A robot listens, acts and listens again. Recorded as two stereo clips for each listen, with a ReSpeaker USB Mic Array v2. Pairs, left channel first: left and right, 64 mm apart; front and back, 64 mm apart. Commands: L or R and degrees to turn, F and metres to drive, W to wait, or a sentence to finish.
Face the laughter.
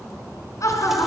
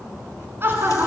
L130
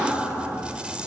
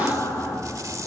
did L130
R10
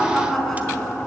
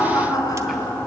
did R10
L10
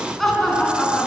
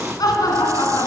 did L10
Facing the laughter.